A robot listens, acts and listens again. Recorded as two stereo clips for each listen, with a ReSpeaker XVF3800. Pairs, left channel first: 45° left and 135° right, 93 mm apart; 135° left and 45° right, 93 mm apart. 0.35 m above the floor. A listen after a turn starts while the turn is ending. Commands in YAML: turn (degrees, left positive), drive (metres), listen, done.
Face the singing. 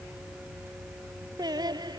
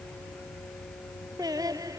turn: -95
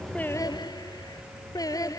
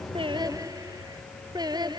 done: "Facing the singing."